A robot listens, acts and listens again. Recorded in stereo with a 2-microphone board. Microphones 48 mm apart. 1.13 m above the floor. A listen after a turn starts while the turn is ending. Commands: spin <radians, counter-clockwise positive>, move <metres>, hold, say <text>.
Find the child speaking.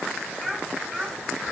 spin 0.52
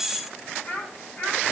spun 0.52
spin 2.53
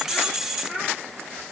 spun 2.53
spin -0.26
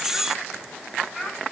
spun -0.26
say Found it: a child speaking, straight ahead, over 4 m away.